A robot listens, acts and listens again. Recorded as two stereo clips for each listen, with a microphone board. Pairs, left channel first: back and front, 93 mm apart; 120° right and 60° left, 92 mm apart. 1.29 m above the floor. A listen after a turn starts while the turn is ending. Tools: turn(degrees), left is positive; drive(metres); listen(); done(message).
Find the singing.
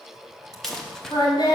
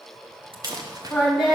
turn(degrees=140)
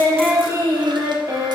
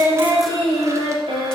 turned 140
turn(degrees=50)
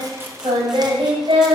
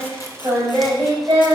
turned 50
done("Found it: singing, straight ahead.")